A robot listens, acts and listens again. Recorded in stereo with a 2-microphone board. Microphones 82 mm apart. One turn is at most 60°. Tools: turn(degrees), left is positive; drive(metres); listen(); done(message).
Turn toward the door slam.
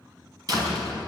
turn(degrees=-50)
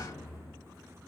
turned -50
turn(degrees=-60)
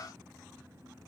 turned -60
turn(degrees=-20)
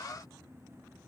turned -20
done("Facing where the door slam came from. I can't hear it now.")